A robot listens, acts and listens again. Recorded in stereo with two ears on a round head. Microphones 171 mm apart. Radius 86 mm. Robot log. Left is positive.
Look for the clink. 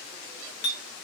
note: The clink: about 55° left or 125° left.
cmd yaw +55
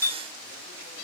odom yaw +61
note: So it is at 20° left.
cmd yaw +20
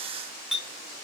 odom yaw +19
end: Facing the clink, under 1 m away.